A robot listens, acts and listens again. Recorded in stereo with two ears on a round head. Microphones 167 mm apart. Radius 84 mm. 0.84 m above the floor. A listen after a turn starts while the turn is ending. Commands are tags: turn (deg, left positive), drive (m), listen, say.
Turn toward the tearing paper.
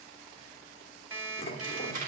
<turn deg="-45"/>
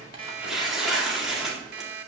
<say>Found it: tearing paper, straight ahead.</say>